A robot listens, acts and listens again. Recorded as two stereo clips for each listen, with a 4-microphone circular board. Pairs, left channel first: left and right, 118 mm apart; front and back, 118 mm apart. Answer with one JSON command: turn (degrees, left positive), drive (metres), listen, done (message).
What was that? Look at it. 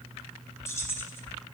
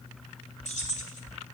{"turn": 20}
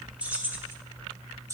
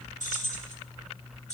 {"turn": -25}
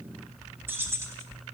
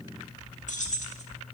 {"turn": -20}
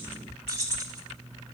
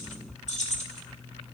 {"turn": -30}
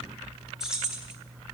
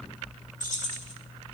{"done": "Facing the keys jangling."}